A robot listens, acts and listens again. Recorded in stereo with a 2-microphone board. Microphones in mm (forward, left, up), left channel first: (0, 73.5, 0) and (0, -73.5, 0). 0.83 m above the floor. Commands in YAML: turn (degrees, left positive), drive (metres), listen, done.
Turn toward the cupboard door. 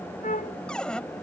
turn: 30
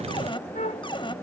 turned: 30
turn: 145
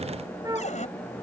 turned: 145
turn: 55
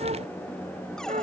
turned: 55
listen: true
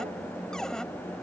done: "Found it: a cupboard door, straight ahead."